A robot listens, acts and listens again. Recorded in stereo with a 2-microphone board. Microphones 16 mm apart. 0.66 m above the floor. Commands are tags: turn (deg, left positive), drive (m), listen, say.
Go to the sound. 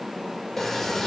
<turn deg="25"/>
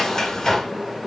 <turn deg="125"/>
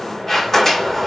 <turn deg="25"/>
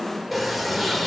<drive m="1.0"/>
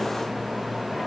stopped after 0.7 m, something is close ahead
<turn deg="15"/>
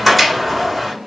<say>Arrived at the sliding door, straight ahead.</say>